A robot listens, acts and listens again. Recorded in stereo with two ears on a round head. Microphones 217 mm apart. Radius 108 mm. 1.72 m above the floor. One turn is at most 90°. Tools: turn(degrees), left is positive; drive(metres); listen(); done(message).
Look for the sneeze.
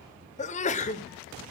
turn(degrees=30)
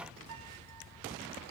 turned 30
listen()
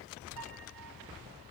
done("I heard a sneeze, but can't make it out now. It was about straight ahead or 120° left.")